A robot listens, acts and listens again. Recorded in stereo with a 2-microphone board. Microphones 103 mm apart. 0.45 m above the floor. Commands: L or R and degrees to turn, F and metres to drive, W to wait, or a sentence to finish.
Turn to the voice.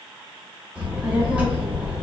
R30
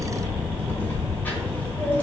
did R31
L15
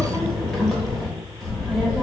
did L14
Facing the child speaking.